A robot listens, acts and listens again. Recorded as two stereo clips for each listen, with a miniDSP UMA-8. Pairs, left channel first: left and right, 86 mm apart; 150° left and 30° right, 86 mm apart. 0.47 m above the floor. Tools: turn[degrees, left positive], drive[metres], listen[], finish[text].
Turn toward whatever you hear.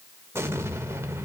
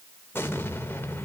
Thought: The explosion: 150° right.
Action: turn[-150]
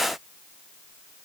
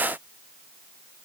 Action: finish[Facing where the explosion came from. I can't hear it now.]